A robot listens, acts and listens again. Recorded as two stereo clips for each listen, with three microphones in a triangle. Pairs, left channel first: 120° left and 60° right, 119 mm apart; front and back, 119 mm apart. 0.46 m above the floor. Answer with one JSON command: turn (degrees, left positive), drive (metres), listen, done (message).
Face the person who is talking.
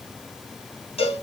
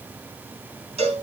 {"listen": true}
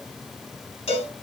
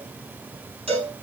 {"listen": true}
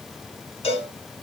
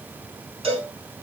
{"done": "I can't make out anyone speaking to turn to."}